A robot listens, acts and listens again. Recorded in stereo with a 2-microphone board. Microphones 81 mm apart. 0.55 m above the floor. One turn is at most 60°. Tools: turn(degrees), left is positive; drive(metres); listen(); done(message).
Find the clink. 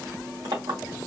turn(degrees=-60)
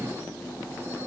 listen()
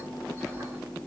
listen()
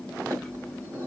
turn(degrees=-45)
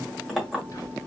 done("Facing the clink, 1 to 2 m away.")